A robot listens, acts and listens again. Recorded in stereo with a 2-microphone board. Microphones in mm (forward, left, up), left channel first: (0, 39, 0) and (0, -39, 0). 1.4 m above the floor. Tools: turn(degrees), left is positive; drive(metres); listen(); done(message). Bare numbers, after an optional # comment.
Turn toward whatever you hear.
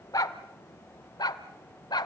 # The dog barking: about 65° left or 115° left.
turn(65)
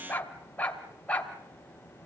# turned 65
# So it is at 15° left.
turn(15)
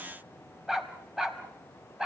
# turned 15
done("Facing the dog barking, 2 to 4 m away.")